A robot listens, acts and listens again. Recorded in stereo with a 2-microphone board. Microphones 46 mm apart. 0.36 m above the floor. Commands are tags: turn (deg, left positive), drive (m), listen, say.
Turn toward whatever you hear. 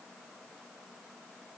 <listen/>
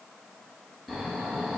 <turn deg="30"/>
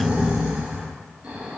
<turn deg="-25"/>
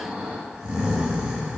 <turn deg="-20"/>
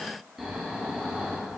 <say>Found it: snoring, straight ahead.</say>